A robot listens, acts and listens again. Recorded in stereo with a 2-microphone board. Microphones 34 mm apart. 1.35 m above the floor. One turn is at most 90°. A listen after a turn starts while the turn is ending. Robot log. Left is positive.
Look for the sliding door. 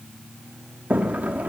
note: The sliding door: about 50° right or 130° right.
cmd yaw -50
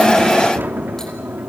note: So it is at 80° right.
cmd yaw -80
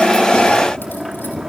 note: The sliding door is now 10° right.
cmd yaw -10
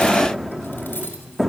end: Facing the sliding door.